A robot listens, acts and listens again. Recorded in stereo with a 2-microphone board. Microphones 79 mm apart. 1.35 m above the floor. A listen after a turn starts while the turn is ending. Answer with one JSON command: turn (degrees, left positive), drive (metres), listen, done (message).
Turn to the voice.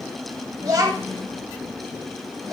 {"turn": -45}
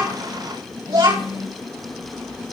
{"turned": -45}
{"turn": -95}
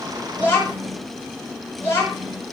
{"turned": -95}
{"turn": 30}
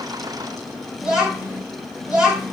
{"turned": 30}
{"turn": -10}
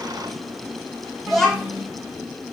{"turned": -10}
{"done": "Found it: a child speaking, straight ahead."}